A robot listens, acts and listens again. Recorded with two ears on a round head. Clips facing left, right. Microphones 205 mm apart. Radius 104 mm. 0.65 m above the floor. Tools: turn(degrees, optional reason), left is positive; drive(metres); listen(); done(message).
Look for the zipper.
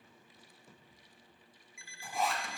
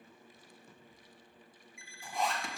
turn(degrees=30)
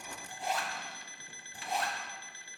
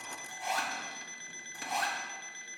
turn(degrees=145, reason="So it is at 145° left.")
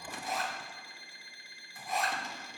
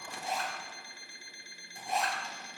turn(degrees=-25, reason="The zipper is now 25° right.")
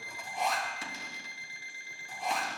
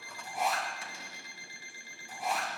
done("Facing the zipper.")